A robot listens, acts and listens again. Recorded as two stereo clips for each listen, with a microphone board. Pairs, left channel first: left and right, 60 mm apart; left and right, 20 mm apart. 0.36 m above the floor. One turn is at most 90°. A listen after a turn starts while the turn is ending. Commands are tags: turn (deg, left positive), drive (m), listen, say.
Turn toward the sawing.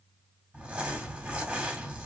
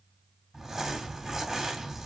<listen/>
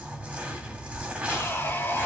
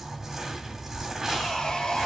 <turn deg="35"/>
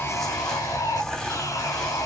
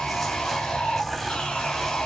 <turn deg="90"/>
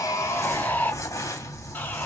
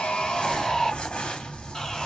<turn deg="30"/>
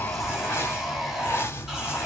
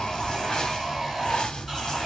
<turn deg="-10"/>
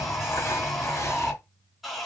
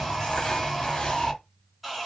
<say>Facing the sawing.</say>